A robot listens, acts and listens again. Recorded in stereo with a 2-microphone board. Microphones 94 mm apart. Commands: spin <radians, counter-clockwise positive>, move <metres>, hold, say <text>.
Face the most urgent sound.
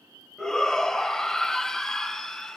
spin 0.52
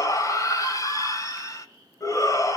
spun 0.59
spin 2.44
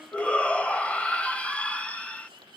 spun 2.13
spin 0.26
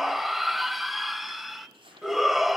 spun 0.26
say Found it: a shout, straight ahead.